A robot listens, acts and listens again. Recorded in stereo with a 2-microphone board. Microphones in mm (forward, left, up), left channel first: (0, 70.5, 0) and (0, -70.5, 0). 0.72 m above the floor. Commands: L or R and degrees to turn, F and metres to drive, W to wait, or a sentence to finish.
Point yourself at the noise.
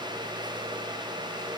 W
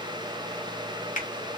L65
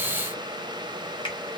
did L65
L40
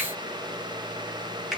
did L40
Found it: a finger snap, straight ahead.